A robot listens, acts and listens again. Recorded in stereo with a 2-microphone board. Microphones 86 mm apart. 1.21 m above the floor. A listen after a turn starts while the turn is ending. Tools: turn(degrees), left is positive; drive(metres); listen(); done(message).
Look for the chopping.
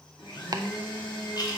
turn(degrees=-45)
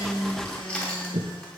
turn(degrees=-85)
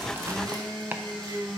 turn(degrees=-20)
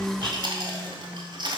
listen()
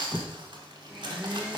done("Found it: chopping, straight ahead.")